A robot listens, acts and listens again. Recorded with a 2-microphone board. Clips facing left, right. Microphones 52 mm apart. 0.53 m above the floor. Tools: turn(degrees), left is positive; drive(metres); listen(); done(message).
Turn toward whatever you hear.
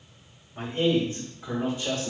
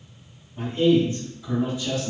turn(degrees=45)
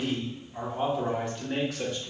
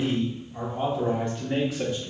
turn(degrees=-10)
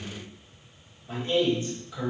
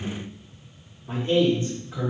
turn(degrees=-35)
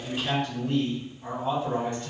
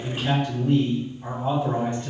turn(degrees=-20)
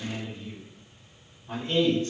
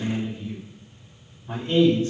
done("Found it: a man speaking, straight ahead, 1 to 2 m away.")